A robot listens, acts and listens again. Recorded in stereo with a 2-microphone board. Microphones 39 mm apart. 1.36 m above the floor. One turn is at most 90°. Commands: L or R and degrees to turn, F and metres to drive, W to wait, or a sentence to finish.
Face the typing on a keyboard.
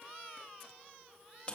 W
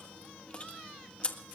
W
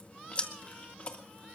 I can't make out typing on a keyboard, only chewing.